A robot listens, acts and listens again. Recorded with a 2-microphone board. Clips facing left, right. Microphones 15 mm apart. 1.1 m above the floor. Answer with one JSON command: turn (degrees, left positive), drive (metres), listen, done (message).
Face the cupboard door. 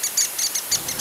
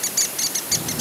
{"listen": true}
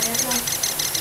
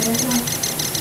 {"listen": true}
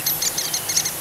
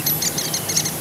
{"done": "I can't make out a cupboard door, only a child speaking."}